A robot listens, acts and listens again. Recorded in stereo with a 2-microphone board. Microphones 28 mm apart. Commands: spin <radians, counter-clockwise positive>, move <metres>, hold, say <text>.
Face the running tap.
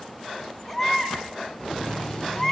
spin 0.35
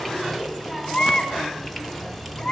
say Found it: a running tap, straight ahead, 1 to 2 m away.